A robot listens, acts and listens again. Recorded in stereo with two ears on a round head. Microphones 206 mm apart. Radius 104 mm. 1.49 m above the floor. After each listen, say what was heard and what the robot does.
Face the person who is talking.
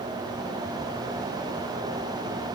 Keep listening.
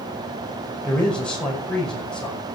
Turn 30° left.
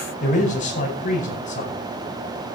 So it is at 145° left. Turn 145° left.
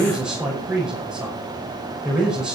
Found it: a man speaking, straight ahead.